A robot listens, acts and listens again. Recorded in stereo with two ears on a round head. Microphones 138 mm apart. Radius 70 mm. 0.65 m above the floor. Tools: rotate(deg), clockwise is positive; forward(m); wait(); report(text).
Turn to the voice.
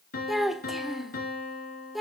rotate(-30)
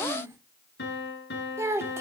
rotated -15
rotate(15)
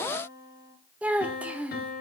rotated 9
rotate(10)
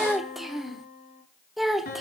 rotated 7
report("Found it: a child speaking, straight ahead, 1 to 2 m away.")